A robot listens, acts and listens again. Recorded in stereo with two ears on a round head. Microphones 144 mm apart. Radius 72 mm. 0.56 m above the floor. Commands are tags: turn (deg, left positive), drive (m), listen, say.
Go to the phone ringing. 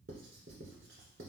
<listen/>
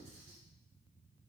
<listen/>
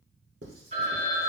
<turn deg="-45"/>
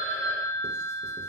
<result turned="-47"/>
<turn deg="-85"/>
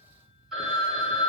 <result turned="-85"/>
<drive m="1.0"/>
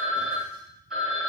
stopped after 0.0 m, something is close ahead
<say>Blocked. The phone ringing is further on, straight ahead.</say>